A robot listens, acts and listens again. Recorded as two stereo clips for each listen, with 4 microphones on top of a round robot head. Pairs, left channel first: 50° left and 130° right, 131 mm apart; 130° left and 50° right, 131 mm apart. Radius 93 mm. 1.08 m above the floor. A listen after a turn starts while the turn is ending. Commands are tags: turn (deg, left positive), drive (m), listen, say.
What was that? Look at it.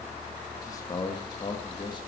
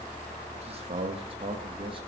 <say>Facing the man speaking, 2 to 4 m away.</say>